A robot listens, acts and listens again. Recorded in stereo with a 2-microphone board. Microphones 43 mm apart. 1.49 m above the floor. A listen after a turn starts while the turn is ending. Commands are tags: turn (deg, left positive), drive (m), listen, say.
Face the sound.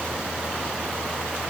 <listen/>
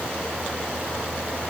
<listen/>
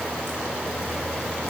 <say>I can't make out anything to turn to.</say>